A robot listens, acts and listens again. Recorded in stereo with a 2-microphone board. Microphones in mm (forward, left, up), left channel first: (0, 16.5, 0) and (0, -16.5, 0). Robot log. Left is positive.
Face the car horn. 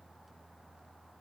cmd idle
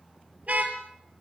note: The car horn: about 45° right or 135° right.
cmd yaw -45
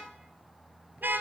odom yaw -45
note: So it is at 90° right.
cmd yaw -90
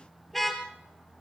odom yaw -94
end: Facing the car horn.